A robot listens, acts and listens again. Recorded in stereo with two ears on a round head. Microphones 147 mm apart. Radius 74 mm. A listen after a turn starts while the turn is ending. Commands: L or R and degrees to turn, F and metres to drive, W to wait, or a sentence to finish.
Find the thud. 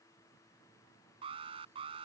W
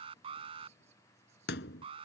L65
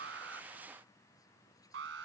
W
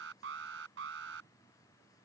I heard a thud, but can't make it out now. It was about straight ahead or 50° left.